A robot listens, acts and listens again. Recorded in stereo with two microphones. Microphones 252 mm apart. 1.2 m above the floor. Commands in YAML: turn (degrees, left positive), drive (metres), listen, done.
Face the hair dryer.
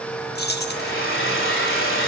turn: 55
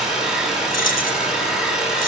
done: "Facing the hair dryer, 2 to 4 m away."